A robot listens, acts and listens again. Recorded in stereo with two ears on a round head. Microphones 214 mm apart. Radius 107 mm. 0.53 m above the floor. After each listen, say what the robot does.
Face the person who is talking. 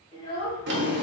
Turn 25° left.
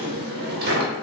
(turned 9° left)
Keep listening.
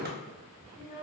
Turn 30° left.
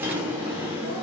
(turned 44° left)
Keep listening.
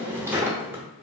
Keep listening.
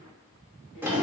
I heard a child speaking, but can't make it out now. It was about 15° right or 105° left.